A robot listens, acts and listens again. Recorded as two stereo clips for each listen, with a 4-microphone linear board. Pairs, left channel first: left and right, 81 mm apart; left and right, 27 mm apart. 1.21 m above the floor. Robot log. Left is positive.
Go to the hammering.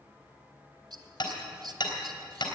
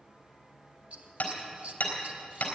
note: The hammering: about 60° left or 120° left.
cmd yaw +60
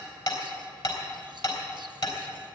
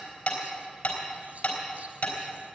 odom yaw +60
note: So it is at 60° left.
cmd yaw +60
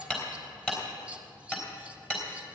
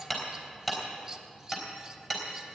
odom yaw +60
note: The hammering is now 10° left.
cmd yaw +10
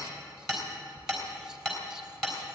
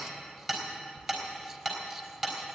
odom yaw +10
cmd fwd 1.0
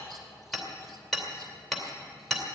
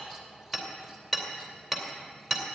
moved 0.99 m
cmd fwd 1.0
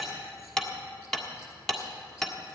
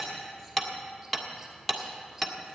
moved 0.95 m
cmd fwd 1.0
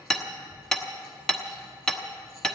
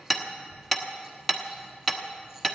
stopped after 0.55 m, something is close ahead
note: The hammering is now 10° left.
cmd yaw +10
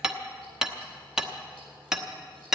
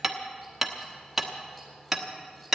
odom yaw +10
end: I am next to the hammering.